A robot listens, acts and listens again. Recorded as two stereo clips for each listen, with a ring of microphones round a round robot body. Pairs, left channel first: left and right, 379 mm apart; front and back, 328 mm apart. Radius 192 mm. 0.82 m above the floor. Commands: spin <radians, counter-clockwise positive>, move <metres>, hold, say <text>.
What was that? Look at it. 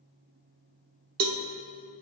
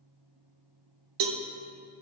spin -2.53
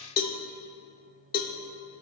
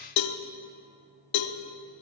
spin 0.35
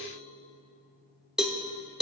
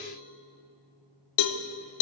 say Facing the cowbell, under 1 m away.